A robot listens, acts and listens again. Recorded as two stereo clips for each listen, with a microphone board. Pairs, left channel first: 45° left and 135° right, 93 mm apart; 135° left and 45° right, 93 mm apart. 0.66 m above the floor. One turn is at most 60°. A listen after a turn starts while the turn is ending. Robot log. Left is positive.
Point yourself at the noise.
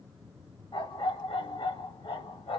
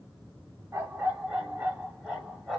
note: The dog barking: 45° left.
cmd yaw +45
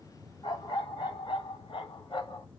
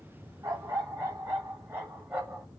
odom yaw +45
note: The dog barking is now 25° left.
cmd yaw +25
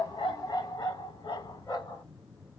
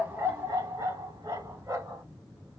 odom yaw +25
note: The dog barking is now 10° left.
cmd yaw +10
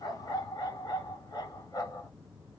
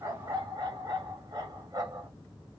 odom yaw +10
end: Found it: a dog barking, straight ahead.